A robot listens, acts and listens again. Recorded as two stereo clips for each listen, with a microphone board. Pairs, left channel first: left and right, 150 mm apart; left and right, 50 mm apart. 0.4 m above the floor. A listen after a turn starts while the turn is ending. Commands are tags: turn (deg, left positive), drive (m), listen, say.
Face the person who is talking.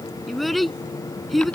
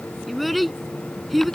<turn deg="30"/>
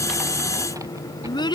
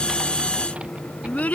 <turn deg="150"/>
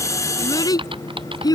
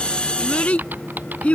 <turn deg="25"/>
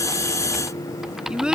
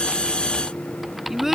<say>Found it: a child speaking, straight ahead.</say>